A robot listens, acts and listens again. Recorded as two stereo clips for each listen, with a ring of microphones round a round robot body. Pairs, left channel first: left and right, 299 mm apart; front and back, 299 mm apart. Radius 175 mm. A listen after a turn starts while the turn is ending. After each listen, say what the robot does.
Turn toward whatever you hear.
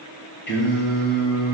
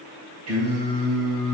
Turn 145° left.
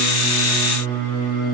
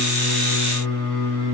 Turn 30° left.
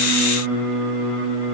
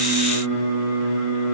Facing the singing, 2 to 4 m away.